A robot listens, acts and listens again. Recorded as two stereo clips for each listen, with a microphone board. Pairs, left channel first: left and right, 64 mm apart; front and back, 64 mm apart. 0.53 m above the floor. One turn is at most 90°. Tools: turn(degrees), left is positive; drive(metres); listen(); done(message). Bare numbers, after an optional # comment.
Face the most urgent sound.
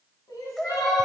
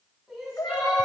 # The crying: 95° left.
turn(90)
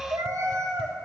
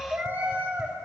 listen()
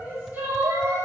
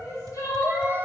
# The crying is now 30° right.
turn(-30)
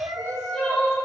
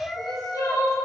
done("Facing the crying.")